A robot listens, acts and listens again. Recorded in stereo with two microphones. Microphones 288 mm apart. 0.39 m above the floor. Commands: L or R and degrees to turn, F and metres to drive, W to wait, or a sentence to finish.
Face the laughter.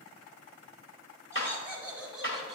L30
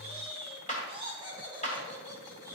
R30
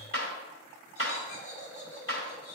L25
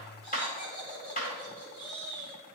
Facing the laughter.